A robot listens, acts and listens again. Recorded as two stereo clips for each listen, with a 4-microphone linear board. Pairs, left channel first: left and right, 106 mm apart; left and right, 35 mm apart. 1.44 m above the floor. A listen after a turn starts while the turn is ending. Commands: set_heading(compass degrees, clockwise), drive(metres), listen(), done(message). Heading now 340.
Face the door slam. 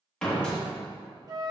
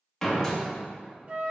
set_heading(310)
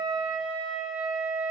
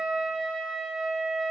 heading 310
listen()
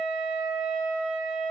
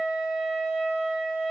done("I heard a door slam, but can't make it out now. It was about 20° right or 140° left.")